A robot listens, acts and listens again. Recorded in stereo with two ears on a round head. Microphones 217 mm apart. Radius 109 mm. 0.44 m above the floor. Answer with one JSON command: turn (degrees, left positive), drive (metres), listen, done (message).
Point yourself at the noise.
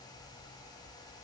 {"listen": true}
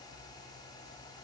{"listen": true}
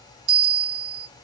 {"turn": -90}
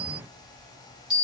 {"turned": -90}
{"done": "Found it: a bell, straight ahead, 2 to 4 m away."}